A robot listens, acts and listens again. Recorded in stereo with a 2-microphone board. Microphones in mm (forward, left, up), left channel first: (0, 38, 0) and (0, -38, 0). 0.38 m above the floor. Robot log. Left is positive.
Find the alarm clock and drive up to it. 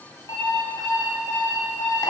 note: The alarm clock: about 65° left or 115° left.
cmd yaw +65
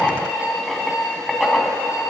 note: So it is at 50° left.
cmd yaw +50
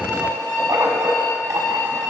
cmd fwd 1.0
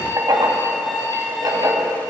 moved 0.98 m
cmd fwd 1.0
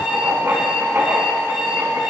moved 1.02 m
cmd fwd 1.0
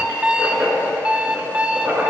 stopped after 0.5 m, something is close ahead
note: The alarm clock is now 15° right.
cmd yaw -15
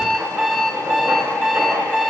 end: I am next to the alarm clock.